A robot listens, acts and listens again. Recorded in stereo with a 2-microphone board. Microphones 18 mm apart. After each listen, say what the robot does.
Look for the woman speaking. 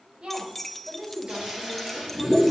Turn 65° right.
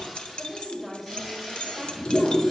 Found it: a woman speaking, straight ahead.